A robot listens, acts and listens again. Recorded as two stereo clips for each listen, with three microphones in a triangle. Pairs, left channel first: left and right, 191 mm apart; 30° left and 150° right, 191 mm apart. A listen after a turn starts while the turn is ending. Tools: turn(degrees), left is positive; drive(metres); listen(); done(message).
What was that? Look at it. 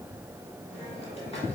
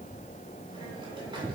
listen()
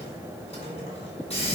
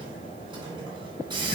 turn(degrees=145)
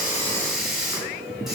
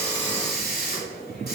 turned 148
done("Found it: a hiss, straight ahead, 2 to 4 m away.")